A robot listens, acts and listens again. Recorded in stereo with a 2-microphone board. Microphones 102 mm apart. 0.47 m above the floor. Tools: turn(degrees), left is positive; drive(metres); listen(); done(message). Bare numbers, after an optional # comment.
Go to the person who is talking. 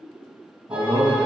# The man speaking: about 70° right or 110° right.
turn(-70)
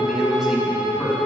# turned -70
# So it is at 10° right.
turn(-10)
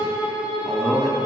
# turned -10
drive(1.0)
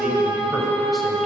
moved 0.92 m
listen()
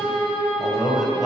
drive(1.0)
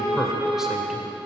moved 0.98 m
drive(1.0)
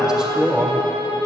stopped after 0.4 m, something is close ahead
# The man speaking is now 10° right.
turn(-10)
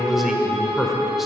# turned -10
done("Arrived at the man speaking, straight ahead.")